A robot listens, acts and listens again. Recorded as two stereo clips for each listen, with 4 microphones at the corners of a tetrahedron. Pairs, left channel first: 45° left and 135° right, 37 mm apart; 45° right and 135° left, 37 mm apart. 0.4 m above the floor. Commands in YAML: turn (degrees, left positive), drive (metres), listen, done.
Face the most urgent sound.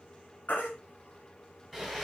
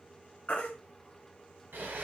done: "Found it: a baby crying, straight ahead."